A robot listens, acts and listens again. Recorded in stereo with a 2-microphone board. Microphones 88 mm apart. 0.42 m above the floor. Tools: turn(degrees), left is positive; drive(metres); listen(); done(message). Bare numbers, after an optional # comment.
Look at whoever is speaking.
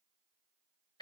listen()
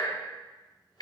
listen()
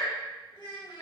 # The child speaking: about 55° left or 125° left.
turn(55)
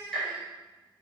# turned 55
# So it is at 65° left.
turn(65)
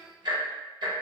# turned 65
done("Facing the child speaking.")